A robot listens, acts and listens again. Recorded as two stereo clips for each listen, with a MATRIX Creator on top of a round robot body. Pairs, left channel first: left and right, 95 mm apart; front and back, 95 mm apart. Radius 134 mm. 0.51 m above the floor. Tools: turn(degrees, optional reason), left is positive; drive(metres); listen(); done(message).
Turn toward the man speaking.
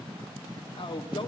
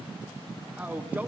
turn(degrees=105, reason="The man speaking: 105° left.")
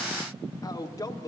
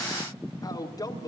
turn(degrees=45, reason="The man speaking is now 45° left.")
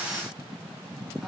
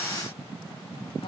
listen()
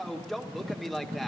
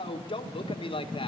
done("Facing the man speaking.")